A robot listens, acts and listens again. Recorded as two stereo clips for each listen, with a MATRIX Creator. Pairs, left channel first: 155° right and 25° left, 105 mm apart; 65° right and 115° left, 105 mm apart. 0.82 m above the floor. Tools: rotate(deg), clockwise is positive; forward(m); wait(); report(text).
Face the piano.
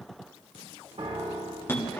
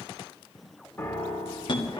report("Found it: a piano, straight ahead.")